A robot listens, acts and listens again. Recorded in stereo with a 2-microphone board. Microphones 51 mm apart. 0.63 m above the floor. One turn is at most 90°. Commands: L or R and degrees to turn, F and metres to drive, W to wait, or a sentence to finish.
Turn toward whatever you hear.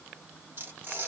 R50
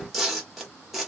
Found it: tearing paper, straight ahead, 1 to 2 m away.